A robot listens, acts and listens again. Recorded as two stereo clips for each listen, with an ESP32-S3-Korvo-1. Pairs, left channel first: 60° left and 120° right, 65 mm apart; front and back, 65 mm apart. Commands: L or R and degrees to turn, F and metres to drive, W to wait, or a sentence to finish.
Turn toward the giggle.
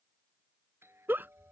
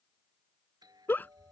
R65
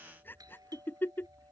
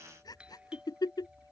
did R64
Facing the giggle.